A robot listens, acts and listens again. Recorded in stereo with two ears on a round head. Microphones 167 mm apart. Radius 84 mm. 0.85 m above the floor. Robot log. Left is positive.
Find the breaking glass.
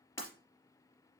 note: The breaking glass: about 15° left or 165° left.
cmd yaw +15
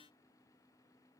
cmd idle
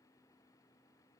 end: I heard breaking glass, but can't make it out now. It was about straight ahead or 150° left.